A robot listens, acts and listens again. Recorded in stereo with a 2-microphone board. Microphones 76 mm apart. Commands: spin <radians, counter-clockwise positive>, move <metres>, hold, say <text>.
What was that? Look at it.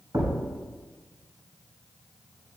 spin -1.05
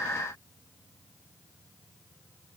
hold
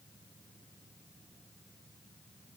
say I heard a thud, but can't make it out now. It was about straight ahead or 60° right.